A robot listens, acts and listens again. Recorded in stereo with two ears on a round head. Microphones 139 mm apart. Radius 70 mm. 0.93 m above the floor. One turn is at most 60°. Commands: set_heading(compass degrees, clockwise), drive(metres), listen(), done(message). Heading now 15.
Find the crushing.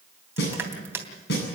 set_heading(30)
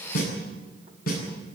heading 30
listen()
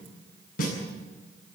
listen()
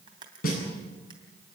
done("I heard crushing, but can't make it out now. It was about straight ahead or 150° right.")